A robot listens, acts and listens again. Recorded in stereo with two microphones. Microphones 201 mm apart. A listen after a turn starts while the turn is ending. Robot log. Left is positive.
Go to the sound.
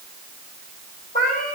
note: The cat meowing: about 45° left or 135° left.
cmd yaw +45
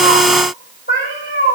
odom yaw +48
note: So it is at 85° left.
cmd yaw +85
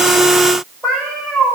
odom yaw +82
cmd fwd 1.0
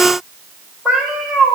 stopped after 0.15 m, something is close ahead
end: Blocked. The cat meowing is further on, straight ahead.